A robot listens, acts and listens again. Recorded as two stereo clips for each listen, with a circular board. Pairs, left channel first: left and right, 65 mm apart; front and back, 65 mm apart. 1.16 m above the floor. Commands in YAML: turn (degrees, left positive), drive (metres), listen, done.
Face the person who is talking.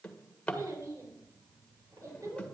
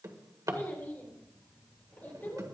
turn: -60
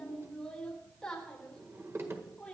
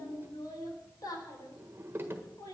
turn: 10
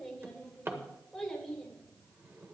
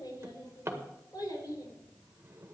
done: "Found it: a child speaking, straight ahead, 2 to 4 m away."